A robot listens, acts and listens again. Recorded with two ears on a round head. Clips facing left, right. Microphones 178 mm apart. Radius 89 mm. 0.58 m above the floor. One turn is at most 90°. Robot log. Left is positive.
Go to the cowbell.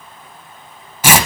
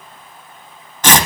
cmd idle
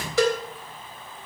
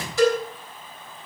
note: The cowbell: about 60° left or 120° left.
cmd yaw +60
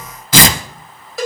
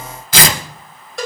cmd fwd 1.0
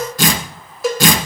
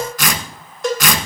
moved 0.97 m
cmd fwd 1.0
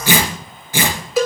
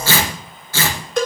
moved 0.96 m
cmd fwd 1.0
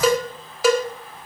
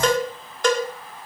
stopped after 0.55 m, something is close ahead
note: The cowbell is now 10° left.
cmd yaw +10
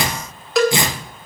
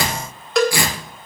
end: Arrived at the cowbell, straight ahead.